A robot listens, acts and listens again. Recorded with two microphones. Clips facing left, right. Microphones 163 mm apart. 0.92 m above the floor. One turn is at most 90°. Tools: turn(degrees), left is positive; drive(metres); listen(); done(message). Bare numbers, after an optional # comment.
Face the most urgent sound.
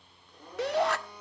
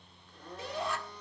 turn(90)
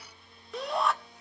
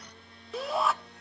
done("Facing the shout.")